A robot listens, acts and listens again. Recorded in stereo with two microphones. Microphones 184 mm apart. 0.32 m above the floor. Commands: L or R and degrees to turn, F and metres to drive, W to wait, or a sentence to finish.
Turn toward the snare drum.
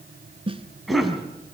R30
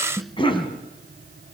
Found it: a snare drum, straight ahead.